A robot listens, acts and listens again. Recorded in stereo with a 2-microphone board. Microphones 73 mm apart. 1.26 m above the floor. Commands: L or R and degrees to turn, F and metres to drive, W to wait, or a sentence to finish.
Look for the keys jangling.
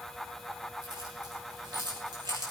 R90
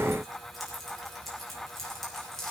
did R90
Facing the keys jangling, over 4 m away.